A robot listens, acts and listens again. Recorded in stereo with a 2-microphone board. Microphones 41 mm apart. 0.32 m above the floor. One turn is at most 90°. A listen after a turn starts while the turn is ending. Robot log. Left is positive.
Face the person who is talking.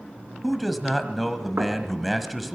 cmd yaw +30
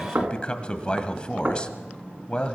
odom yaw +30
note: So it is at 150° left.
cmd yaw +90
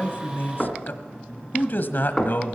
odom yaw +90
note: The man speaking is now 75° left.
cmd yaw +75
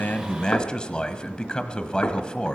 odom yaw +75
note: The man speaking is now 30° left.
cmd yaw +30
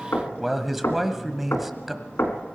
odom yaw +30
end: Facing the man speaking.